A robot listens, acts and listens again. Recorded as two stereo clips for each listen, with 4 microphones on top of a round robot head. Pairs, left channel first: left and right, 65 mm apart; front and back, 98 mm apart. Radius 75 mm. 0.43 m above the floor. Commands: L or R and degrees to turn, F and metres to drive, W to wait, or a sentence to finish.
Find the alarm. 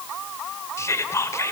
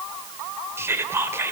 W
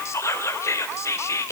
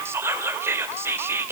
W
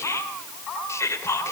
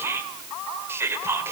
I can't make out an alarm, only whispering.